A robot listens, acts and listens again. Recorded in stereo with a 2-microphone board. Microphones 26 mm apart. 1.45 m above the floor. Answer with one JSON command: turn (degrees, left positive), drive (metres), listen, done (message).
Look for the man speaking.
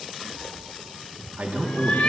{"turn": -60}
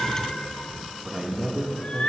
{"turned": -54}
{"turn": -30}
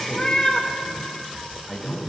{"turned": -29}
{"turn": 10}
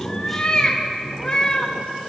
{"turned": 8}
{"done": "Facing the man speaking, 2 to 4 m away."}